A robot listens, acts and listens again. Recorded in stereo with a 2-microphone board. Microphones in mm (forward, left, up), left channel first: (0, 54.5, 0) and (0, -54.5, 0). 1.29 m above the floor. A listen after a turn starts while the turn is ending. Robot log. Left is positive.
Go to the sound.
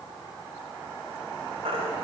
note: The baby crying: about 70° right or 110° right.
cmd yaw -70
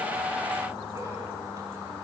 cmd idle
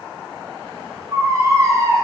note: So it is at 35° right.
cmd yaw -35
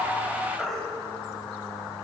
cmd fwd 1.0
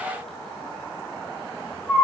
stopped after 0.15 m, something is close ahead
end: Blocked. The baby crying is further on, straight ahead.